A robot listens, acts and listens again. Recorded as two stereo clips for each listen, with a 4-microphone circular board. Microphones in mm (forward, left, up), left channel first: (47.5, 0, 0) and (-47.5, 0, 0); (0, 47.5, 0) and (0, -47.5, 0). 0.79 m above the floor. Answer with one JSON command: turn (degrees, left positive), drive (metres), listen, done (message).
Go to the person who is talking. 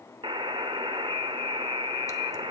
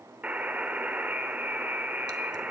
{"listen": true}
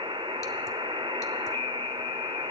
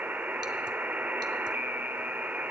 {"listen": true}
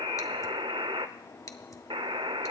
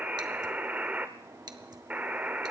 {"done": "I can't make out anyone speaking, only a buzzer."}